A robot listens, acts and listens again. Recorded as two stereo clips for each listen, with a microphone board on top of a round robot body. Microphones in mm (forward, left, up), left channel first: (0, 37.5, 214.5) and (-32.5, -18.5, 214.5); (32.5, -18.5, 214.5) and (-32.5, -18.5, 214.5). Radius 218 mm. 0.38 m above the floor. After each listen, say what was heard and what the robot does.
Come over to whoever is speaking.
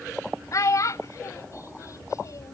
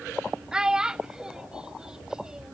The child speaking: 100° left. Turn 100° left.
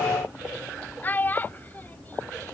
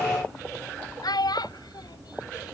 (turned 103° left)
Drive 1.0 m forward.
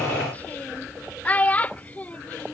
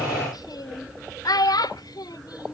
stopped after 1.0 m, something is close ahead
I am next to the child speaking.